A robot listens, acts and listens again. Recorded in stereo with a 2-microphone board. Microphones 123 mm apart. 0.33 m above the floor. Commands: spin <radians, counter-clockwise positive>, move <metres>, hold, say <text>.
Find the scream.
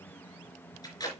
hold
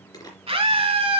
spin -0.96
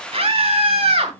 spin -1.05
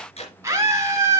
spin -0.52
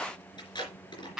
say Found it: a scream, straight ahead, 2 to 4 m away.